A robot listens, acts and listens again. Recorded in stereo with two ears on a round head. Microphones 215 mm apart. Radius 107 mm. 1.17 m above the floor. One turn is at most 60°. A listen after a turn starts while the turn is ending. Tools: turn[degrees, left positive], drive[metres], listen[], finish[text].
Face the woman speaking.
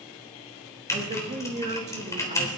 Thought: The woman speaking: about 30° right or 150° right.
Action: turn[-30]
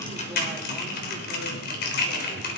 Action: listen[]
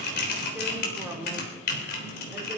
Thought: So it is at 10° right.
Action: turn[-10]
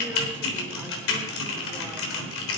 Action: listen[]
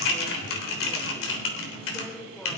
Action: finish[Found it: a woman speaking, straight ahead, over 4 m away.]